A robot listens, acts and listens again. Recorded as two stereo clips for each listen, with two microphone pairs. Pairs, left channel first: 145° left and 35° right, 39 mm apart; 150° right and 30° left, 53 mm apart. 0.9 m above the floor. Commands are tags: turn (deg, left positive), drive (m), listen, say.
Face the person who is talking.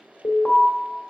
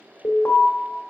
<listen/>
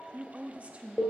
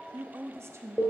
<turn deg="15"/>
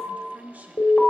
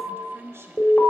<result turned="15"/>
<say>Found it: a woman speaking, straight ahead.</say>